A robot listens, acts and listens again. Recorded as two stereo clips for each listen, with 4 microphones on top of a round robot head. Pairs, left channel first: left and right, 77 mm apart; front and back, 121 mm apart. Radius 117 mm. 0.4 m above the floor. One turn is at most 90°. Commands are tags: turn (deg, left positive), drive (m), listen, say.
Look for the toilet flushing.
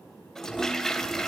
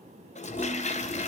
<say>Facing the toilet flushing.</say>